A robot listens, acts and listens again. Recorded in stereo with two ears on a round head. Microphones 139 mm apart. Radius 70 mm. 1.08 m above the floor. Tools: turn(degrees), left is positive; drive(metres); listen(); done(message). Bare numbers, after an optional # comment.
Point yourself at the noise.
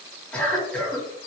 turn(30)
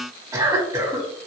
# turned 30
# So it is at 25° right.
turn(-25)
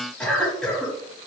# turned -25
done("Facing the cough, 1 to 2 m away.")